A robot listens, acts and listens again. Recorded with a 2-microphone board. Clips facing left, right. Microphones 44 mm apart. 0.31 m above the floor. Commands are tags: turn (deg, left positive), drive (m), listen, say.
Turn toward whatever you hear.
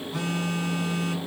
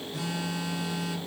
<turn deg="65"/>
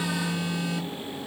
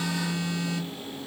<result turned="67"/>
<turn deg="30"/>
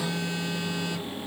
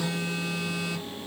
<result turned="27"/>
<say>Found it: a phone buzzing, straight ahead.</say>